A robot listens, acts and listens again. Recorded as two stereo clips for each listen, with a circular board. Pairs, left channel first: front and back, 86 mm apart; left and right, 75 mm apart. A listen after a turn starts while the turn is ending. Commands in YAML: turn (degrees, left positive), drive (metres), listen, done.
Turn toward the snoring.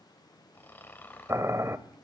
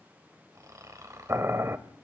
turn: -60
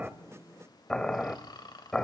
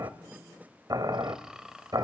turn: -10
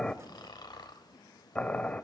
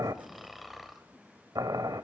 done: "Found it: snoring, straight ahead."